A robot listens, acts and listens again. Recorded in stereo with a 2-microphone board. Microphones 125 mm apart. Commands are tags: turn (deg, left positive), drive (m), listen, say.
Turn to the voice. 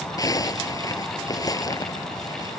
<listen/>
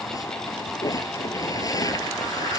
<listen/>
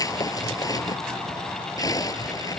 <say>I can't make out anyone speaking, only a zipper.</say>